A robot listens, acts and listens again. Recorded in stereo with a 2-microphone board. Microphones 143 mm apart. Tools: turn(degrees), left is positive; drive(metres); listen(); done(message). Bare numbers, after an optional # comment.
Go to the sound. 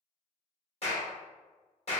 # The clap: about 45° left or 135° left.
turn(45)
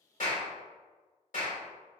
# So it is at 85° left.
turn(85)
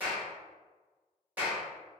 # The clap is now 10° right.
turn(-10)
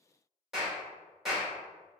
drive(1.0)
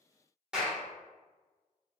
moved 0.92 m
# The clap is now 10° right.
turn(-10)
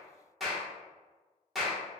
drive(1.0)
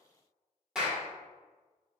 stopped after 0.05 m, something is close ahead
done("I am next to the clap.")